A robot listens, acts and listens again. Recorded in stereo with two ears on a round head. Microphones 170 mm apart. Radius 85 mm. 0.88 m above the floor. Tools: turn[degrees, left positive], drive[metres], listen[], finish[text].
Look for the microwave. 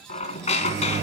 Thought: The microwave: about 40° right or 140° right.
Action: turn[-40]
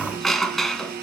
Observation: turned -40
Action: listen[]
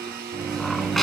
Action: finish[Facing the microwave, under 1 m away.]